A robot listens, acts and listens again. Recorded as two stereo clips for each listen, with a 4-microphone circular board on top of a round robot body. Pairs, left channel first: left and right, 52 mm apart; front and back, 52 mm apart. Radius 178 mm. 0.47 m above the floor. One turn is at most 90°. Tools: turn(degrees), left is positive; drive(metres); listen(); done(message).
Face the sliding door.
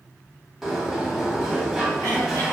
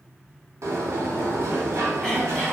turn(degrees=-90)
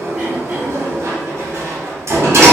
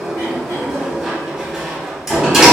turn(degrees=-90)
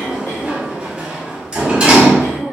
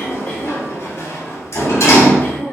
turn(degrees=-20)
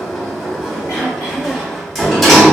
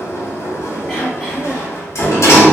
done("Facing the sliding door, under 1 m away.")